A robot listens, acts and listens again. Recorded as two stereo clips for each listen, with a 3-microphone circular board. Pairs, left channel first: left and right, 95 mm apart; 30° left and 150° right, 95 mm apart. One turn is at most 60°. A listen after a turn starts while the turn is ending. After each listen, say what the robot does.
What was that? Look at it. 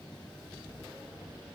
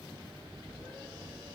Keep listening.
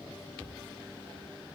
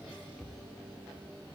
Keep listening.
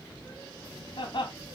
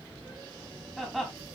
Turn 60° left.
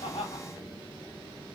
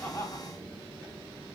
Turn 60° left.
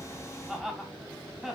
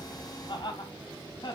Found it: laughter, straight ahead.